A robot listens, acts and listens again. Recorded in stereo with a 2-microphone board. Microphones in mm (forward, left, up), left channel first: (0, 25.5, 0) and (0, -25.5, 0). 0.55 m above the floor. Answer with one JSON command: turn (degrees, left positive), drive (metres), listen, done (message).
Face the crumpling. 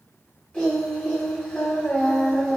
{"listen": true}
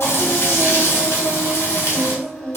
{"listen": true}
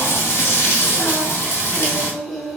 {"done": "I can't make out crumpling to turn to."}